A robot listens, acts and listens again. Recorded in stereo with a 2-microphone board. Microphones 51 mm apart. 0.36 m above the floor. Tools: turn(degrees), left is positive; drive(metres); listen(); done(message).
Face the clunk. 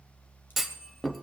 turn(degrees=30)
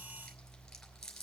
listen()
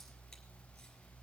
done("I heard a clunk, but can't make it out now. It was about 30° right or 150° left.")